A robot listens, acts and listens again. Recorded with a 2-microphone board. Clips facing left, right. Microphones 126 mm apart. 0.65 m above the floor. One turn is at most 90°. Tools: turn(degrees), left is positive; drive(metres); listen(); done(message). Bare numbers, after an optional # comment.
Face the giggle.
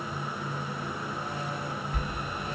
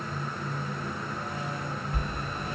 listen()
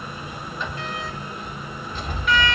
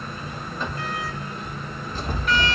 listen()
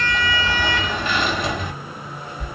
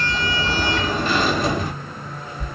done("I can't make out a giggle, only a sliding door.")